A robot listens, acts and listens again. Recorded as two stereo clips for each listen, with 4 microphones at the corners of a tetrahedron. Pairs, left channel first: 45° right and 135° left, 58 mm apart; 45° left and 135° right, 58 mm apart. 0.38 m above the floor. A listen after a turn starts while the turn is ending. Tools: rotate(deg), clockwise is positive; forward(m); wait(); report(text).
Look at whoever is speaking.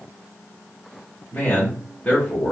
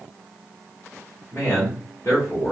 rotate(-20)
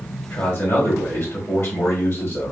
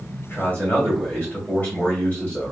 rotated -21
report("Facing the man speaking.")